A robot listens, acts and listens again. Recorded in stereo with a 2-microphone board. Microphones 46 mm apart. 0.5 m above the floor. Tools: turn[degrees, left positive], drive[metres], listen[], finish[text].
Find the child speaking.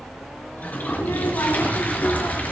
Action: turn[90]
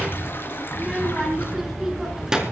Thought: So it is at 15° right.
Action: turn[-15]
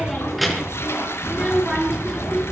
Action: finish[Facing the child speaking.]